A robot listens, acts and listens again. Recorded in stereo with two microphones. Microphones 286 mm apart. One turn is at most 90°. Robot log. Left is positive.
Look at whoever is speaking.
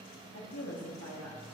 note: The woman speaking: about 60° left or 120° left.
cmd yaw +60
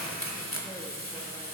cmd idle
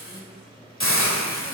cmd idle
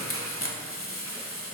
end: I heard a woman speaking, but can't make it out now. It was about straight ahead or 60° left.